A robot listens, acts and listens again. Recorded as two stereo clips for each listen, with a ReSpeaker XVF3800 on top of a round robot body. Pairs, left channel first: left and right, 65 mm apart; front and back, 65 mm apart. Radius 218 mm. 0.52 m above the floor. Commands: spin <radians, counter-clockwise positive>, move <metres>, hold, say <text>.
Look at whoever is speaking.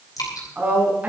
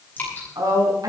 spin -2.71
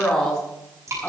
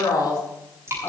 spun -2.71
spin 0.17
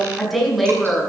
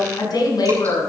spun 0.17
say Facing the woman speaking.